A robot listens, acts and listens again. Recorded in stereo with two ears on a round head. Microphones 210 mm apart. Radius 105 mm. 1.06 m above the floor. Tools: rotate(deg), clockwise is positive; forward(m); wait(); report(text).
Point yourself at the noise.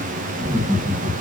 rotate(-30)
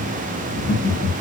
rotate(-130)
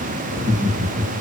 rotate(30)
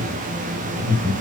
rotate(10)
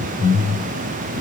report("Facing the laughter.")